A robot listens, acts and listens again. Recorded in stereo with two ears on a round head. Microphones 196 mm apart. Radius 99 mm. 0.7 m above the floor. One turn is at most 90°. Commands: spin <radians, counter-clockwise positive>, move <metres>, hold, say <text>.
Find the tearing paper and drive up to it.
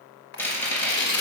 spin 0.87
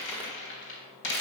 hold
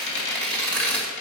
move 1.0
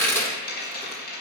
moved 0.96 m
spin 0.17
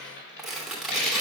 move 1.0
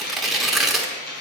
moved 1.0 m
move 1.0
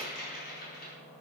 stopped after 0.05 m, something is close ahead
hold
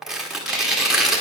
say Arrived at the tearing paper, straight ahead.